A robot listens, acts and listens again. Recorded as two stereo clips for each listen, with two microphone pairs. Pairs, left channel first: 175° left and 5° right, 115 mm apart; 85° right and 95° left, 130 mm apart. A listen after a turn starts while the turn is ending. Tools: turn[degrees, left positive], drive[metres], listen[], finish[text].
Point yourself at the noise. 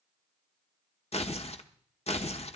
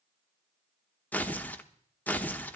Thought: The tearing paper: 160° right.
Action: turn[-160]
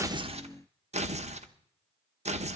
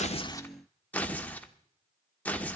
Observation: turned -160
Action: finish[Found it: tearing paper, straight ahead, under 1 m away.]